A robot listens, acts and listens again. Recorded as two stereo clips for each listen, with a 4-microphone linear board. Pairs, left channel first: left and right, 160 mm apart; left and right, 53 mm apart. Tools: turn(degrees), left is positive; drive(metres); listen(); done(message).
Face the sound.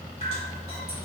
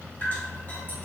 turn(degrees=40)
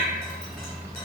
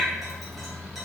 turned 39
listen()
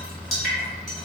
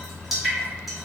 done("Found it: dripping, straight ahead.")